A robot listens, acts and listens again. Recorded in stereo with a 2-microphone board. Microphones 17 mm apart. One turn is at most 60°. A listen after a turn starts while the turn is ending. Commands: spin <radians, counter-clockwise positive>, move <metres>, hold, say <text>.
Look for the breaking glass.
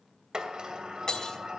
spin 0.70
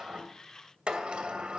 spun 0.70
hold
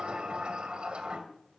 say I heard breaking glass, but can't make it out now. It was about straight ahead or 100° left.